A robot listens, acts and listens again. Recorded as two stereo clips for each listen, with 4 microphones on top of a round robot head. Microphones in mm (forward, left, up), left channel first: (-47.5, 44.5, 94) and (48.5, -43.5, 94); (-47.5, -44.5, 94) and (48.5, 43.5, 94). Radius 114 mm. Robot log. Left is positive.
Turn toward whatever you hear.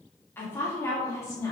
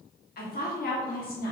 note: The woman speaking: 155° right.
cmd yaw -155
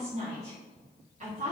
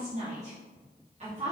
end: Found it: a woman speaking, straight ahead, 2 to 4 m away.